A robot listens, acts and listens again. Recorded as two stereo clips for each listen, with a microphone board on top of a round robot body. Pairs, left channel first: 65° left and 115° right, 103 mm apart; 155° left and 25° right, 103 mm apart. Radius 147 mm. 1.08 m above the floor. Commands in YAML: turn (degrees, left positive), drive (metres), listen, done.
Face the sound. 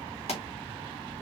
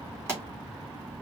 turn: 45
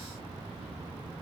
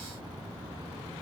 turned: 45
done: "Facing where the pop came from. I can't hear it now."